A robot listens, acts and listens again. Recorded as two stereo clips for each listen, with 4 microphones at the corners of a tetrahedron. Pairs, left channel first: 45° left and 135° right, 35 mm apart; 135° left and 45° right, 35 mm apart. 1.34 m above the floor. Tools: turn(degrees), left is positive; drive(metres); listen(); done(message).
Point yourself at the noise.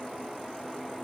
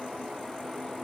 listen()
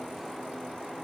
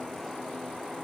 listen()
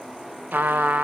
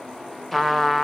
turn(degrees=-140)
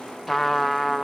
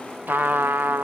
turn(degrees=-45)
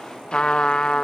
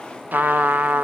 turn(degrees=-20)
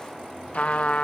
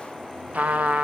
done("Found it: a trumpet, straight ahead, under 1 m away.")